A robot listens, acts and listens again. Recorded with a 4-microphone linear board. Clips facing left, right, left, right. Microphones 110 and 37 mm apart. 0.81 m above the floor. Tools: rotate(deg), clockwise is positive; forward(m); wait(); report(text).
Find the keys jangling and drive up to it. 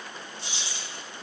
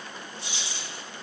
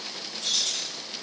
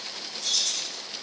rotate(-45)
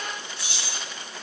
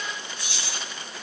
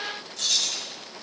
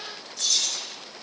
rotate(-90)
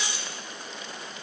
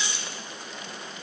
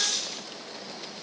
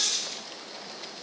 rotate(-10)
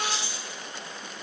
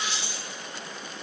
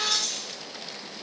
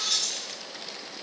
forward(1.0)
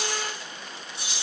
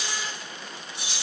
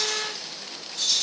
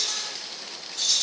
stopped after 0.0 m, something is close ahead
report("Blocked. The keys jangling is further on, straight ahead.")